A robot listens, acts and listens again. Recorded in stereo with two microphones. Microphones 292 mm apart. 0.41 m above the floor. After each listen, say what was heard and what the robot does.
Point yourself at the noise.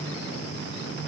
Keep listening.
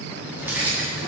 Turn 30° right.
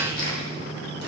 So it is at 35° left. Turn 35° left.
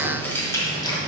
The keys jangling is now 15° left. Turn 15° left.
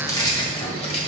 The keys jangling is now 25° left. Turn 25° left.
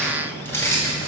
The keys jangling is now 10° left. Turn 10° left.
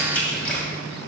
Facing the keys jangling, 1 to 2 m away.